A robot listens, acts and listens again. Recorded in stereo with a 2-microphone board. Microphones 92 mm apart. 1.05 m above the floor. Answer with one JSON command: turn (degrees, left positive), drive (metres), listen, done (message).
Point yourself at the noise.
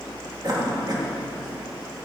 {"turn": -50}
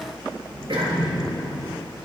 {"turn": -75}
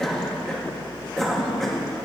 {"done": "Facing the cough, 2 to 4 m away."}